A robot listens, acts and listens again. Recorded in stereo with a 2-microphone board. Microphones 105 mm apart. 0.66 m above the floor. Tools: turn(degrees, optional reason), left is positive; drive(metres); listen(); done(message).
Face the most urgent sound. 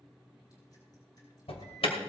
turn(degrees=65, reason="The alarm: about 65° left or 115° left.")
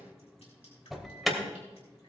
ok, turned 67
done("Found it: an alarm, straight ahead, 2 to 4 m away.")